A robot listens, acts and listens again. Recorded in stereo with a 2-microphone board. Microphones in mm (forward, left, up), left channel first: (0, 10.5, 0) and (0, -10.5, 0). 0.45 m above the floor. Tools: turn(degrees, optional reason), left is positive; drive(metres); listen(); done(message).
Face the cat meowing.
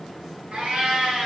turn(degrees=-70, reason="The cat meowing: about 70° right or 110° right.")
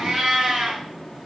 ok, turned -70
turn(degrees=-45, reason="So it is at 45° right.")
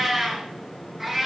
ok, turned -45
done("Found it: a cat meowing, straight ahead.")